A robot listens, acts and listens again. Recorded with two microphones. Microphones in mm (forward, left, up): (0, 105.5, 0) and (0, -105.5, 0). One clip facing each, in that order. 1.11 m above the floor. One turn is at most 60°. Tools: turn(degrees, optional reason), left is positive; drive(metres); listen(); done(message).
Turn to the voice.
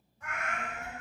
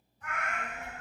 turn(degrees=-30, reason="The child speaking: about 30° right or 150° right.")
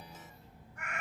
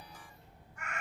turn(degrees=-60, reason="So it is at 120° right.")
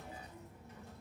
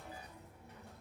turn(degrees=-60, reason="The child speaking is now 60° right.")
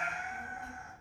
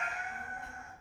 turn(degrees=-40, reason="The child speaking is now 40° right.")
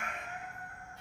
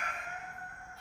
turn(degrees=20, reason="The child speaking is now 20° left.")
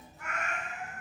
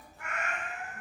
done("Facing the child speaking.")